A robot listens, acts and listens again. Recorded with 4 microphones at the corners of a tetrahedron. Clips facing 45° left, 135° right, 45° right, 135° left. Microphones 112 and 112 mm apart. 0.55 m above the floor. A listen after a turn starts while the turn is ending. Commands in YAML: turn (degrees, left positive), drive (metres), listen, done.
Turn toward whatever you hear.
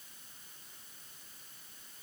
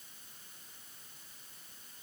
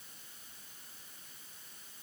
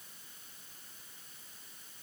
listen: true
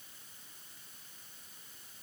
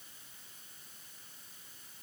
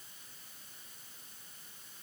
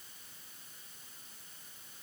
listen: true
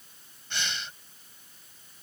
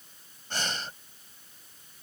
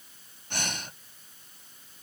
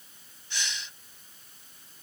turn: -85
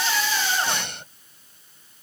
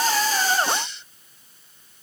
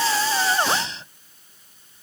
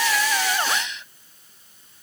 turn: 10
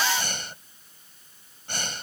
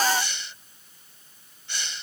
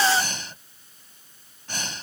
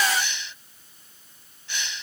done: "Facing the breathing."